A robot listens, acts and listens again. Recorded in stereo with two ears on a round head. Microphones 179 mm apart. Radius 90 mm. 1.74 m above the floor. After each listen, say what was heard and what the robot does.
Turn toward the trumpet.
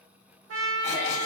The trumpet: about 75° right or 105° right. Turn 75° right.
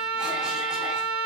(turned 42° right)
So it is at 65° right. Turn 65° right.
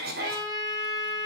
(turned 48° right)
The trumpet is now 15° right. Turn 15° right.
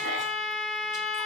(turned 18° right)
Facing the trumpet, under 1 m away.